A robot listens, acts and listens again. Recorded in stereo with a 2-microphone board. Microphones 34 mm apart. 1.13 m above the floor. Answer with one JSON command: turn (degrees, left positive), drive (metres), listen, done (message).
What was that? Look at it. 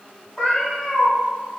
{"turn": 15}
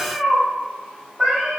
{"turn": -15}
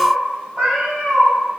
{"turn": -30}
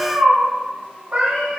{"turn": -45}
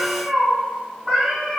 {"turn": -10}
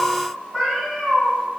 {"done": "Found it: a cat meowing, straight ahead, 1 to 2 m away."}